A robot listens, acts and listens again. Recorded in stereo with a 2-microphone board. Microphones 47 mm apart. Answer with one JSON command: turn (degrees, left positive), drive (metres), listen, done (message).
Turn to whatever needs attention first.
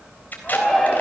{"turn": 30}
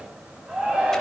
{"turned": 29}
{"turn": -20}
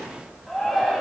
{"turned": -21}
{"done": "Found it: a shout, straight ahead, over 4 m away."}